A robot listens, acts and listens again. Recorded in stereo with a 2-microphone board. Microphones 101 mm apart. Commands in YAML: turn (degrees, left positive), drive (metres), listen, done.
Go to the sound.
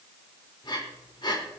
turn: 50
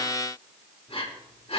turn: 80
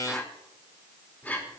turn: 15
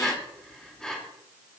drive: 1.0
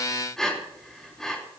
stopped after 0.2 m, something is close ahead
done: "Blocked. The breathing is further on, straight ahead."